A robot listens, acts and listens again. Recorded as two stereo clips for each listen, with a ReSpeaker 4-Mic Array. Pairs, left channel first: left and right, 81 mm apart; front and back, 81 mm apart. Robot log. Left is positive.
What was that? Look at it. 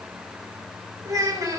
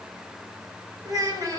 note: The child speaking: 140° right.
cmd yaw -140
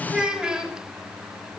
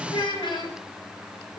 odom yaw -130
note: The child speaking is now 10° right.
cmd yaw -10
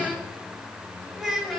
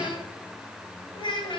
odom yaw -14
end: Facing the child speaking.